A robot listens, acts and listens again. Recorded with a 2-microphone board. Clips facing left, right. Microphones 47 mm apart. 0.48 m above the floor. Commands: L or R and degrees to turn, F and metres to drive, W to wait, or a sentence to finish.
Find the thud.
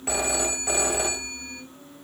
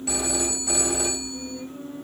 W
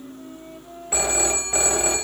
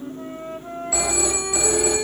W
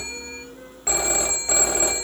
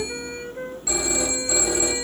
I can't make out a thud, only a flute and a phone ringing.